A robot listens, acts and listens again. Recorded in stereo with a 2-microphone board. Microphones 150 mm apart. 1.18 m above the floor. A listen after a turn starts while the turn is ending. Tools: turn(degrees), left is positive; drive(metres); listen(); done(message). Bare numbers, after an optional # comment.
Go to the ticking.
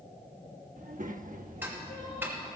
turn(-30)
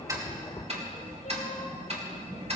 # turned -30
# So it is at 135° right.
turn(-135)
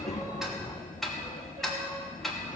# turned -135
drive(1.0)
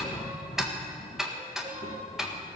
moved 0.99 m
drive(1.0)
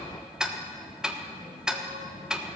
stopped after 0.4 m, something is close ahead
done("I am next to the ticking.")